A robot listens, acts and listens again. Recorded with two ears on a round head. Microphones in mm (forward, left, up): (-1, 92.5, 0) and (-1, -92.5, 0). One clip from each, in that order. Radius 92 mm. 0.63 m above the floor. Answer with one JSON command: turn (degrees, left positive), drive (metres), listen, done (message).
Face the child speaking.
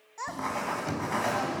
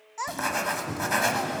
{"turn": -20}
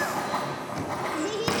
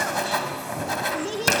{"done": "Found it: a child speaking, straight ahead."}